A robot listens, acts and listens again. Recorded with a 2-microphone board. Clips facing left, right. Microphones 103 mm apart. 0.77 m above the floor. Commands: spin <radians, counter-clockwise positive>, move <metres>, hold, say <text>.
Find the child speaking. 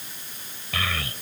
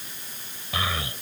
spin -0.35
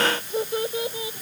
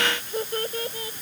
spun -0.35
spin 0.17
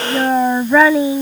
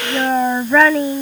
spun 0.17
spin 0.17
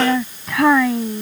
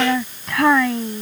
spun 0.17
say Facing the child speaking.